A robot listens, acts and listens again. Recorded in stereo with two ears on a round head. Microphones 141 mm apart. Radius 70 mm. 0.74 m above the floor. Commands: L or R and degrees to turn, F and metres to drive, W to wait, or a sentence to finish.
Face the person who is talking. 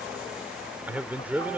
R30
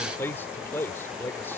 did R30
L15
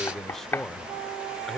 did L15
Found it: a man speaking, straight ahead.